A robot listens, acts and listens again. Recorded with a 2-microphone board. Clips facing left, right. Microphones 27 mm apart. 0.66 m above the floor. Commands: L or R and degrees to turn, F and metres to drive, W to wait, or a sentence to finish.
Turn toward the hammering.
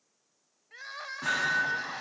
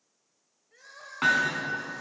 R90
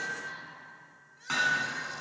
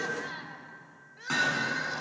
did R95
L10
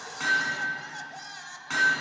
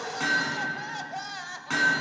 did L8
Found it: hammering, straight ahead, over 4 m away.